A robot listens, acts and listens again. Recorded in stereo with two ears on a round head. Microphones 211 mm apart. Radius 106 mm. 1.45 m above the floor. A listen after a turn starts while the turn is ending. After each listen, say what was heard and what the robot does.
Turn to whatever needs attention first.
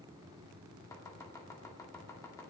Keep listening.
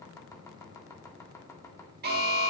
The alarm: about 45° right or 135° right. Turn 45° right.
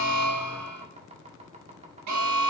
So it is at 90° right. Turn 90° right.
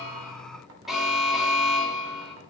Facing the alarm, 2 to 4 m away.